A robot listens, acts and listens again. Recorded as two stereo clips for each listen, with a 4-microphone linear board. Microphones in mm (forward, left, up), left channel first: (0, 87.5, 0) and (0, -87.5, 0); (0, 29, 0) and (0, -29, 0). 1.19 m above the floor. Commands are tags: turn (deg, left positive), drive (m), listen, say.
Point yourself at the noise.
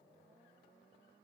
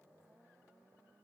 <listen/>
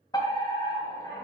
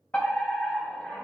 <turn deg="20"/>
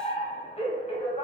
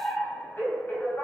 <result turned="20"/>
<turn deg="135"/>
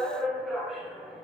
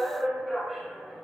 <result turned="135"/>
<say>Facing the fire alarm, 2 to 4 m away.</say>